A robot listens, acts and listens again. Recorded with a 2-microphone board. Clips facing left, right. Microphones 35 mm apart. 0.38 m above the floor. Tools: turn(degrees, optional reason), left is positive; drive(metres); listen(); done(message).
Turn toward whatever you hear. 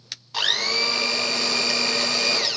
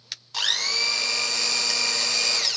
turn(degrees=30)
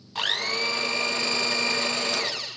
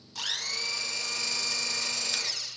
turn(degrees=135, reason="So it is at 135° left.")
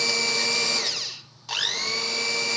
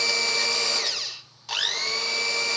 done("Facing the blender.")